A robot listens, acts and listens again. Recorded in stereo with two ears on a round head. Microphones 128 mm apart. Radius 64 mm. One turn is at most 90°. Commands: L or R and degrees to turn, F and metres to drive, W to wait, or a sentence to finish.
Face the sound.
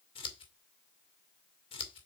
L40
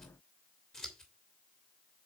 Found it: scissors, straight ahead.